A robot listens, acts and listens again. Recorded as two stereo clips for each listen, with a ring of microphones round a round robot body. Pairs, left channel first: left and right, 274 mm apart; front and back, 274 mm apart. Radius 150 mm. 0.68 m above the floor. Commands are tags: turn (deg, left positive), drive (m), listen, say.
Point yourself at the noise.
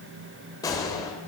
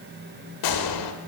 <turn deg="10"/>
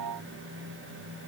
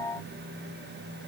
<say>I heard a gunshot from this way, but can't make it out now.</say>